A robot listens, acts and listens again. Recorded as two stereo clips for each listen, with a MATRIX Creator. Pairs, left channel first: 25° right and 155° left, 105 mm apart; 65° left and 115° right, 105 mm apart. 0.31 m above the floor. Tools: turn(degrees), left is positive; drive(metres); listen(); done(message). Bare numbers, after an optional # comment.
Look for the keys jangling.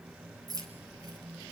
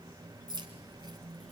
# The keys jangling: 150° right.
turn(-150)
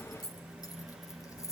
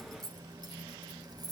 # The keys jangling is now 75° right.
turn(-75)
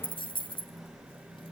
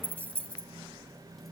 # The keys jangling is now 10° right.
turn(-10)
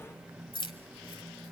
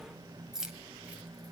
# The keys jangling is now 30° right.
turn(-30)
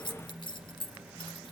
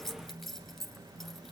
# The keys jangling is now 20° right.
turn(-20)
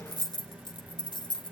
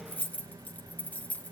done("Found it: keys jangling, straight ahead, 1 to 2 m away.")